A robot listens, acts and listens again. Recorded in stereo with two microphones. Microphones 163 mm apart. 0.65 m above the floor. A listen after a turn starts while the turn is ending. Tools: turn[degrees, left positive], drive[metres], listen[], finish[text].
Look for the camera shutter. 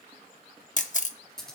Thought: The camera shutter: about 50° left or 130° left.
Action: turn[50]
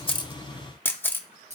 Thought: So it is at 15° left.
Action: turn[15]
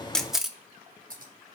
Action: finish[Found it: a camera shutter, straight ahead, under 1 m away.]